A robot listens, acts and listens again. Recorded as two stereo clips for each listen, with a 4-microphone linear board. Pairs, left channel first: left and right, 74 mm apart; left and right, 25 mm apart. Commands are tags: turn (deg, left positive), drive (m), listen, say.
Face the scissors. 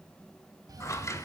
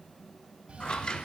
<turn deg="45"/>
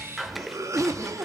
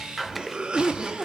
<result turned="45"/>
<say>Facing the scissors, under 1 m away.</say>